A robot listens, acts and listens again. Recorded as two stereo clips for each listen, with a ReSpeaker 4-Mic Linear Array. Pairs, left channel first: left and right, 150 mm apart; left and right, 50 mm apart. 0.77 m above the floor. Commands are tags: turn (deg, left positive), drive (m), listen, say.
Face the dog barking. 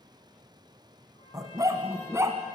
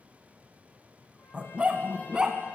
<turn deg="-20"/>
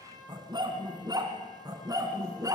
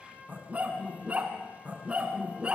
<turn deg="-25"/>
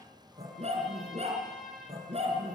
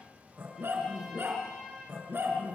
<turn deg="-135"/>
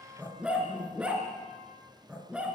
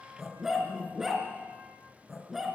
<say>Found it: a dog barking, straight ahead.</say>